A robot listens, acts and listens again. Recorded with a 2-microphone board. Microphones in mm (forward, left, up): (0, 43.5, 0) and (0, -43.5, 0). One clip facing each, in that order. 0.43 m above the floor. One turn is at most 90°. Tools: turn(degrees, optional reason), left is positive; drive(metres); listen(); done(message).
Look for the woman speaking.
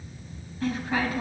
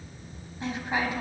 turn(degrees=-20, reason="The woman speaking: about 20° right or 160° right.")
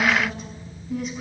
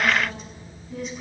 done("Facing the woman speaking.")